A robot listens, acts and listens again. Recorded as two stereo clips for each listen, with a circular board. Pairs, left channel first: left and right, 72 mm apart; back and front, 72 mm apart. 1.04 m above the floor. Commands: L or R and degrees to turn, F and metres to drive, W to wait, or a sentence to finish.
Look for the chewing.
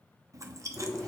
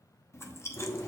R130
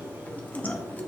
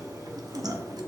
L25
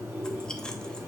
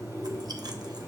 W
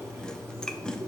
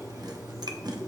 W
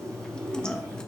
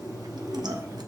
L10
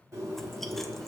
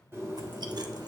W
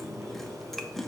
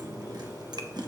Facing the chewing.